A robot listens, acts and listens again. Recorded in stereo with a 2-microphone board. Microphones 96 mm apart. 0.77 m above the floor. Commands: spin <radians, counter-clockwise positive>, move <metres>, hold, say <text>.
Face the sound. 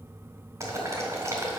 spin -0.61
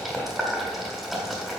say Found it: boiling, straight ahead.